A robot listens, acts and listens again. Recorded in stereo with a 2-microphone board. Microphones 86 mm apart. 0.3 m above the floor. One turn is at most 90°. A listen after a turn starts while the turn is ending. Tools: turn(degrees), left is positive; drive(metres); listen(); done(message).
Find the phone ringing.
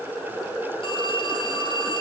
turn(degrees=90)
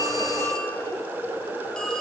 listen()
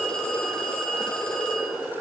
turn(degrees=10)
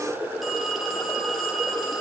done("Facing the phone ringing.")